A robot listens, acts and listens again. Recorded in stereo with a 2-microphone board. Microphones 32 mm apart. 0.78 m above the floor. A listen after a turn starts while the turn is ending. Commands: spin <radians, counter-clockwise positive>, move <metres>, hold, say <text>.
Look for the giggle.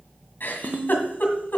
spin 1.13
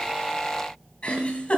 spin 0.79
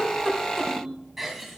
say Found it: a giggle, straight ahead.